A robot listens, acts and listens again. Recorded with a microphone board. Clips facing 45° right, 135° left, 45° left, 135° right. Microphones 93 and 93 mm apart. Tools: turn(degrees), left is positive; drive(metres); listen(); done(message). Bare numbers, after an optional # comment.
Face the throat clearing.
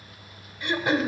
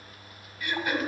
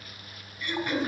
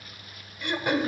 # The throat clearing: 110° right.
turn(-110)
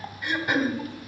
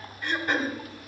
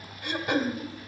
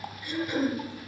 # The throat clearing is now 35° left.
turn(35)
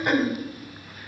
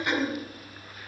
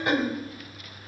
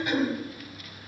done("Found it: throat clearing, straight ahead, 1 to 2 m away.")